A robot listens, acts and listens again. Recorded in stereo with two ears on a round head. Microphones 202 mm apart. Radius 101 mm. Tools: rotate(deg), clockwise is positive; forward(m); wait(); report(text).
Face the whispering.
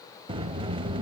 wait()
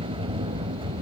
wait()
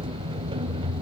report("I can't make out whispering to turn to.")